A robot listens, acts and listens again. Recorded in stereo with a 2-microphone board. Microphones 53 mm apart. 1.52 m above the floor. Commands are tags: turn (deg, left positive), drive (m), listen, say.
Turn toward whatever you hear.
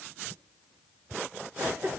<turn deg="-55"/>
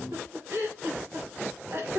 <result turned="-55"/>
<turn deg="-70"/>
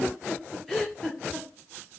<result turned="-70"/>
<say>Found it: a giggle, straight ahead.</say>